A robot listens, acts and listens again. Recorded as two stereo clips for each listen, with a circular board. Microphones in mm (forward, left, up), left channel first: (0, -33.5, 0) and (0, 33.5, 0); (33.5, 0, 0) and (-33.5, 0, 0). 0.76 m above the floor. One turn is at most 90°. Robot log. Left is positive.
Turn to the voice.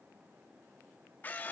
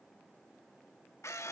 cmd idle
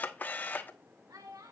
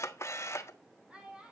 note: The child speaking: 105° left.
cmd yaw +90
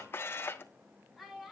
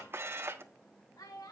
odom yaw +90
end: Found it: a child speaking, straight ahead.